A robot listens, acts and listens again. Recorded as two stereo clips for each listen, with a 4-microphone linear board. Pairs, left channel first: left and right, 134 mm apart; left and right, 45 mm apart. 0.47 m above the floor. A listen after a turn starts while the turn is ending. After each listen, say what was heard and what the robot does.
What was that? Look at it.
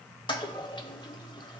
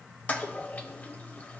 The toilet flushing: about 35° left or 145° left. Turn 35° left.
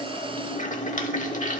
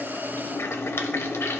So it is at 105° left. Turn 105° left.
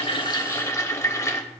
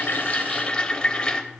The toilet flushing is now 25° left. Turn 25° left.
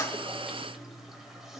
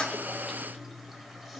Keep listening.
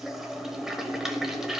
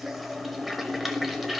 Facing the toilet flushing.